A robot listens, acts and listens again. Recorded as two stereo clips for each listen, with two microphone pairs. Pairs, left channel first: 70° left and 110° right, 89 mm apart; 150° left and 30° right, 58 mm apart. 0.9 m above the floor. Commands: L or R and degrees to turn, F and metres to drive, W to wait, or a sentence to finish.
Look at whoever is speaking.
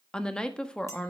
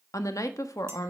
L150
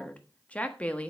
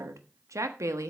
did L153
Facing the woman speaking.